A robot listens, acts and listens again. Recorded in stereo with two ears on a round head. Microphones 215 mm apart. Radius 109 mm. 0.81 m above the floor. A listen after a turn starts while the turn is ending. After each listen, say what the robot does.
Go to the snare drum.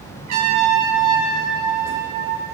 Keep listening.
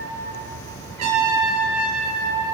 Keep listening.
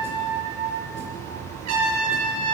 I can't make out a snare drum, only a trumpet.